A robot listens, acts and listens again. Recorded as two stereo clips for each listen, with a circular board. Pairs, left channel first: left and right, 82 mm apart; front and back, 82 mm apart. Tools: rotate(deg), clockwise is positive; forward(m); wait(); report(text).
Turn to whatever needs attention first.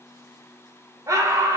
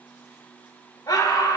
rotate(45)
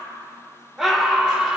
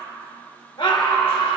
report("Found it: a scream, straight ahead, 2 to 4 m away.")